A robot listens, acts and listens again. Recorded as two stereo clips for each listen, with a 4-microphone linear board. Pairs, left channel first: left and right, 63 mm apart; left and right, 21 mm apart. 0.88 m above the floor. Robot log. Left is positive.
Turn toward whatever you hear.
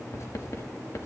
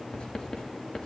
note: The writing: about 55° left or 125° left.
cmd yaw +55
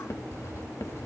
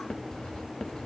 note: So it is at 65° left.
cmd yaw +65
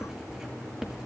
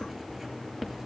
note: The writing is now 10° right.
cmd yaw -10
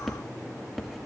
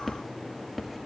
end: Facing the writing, 2 to 4 m away.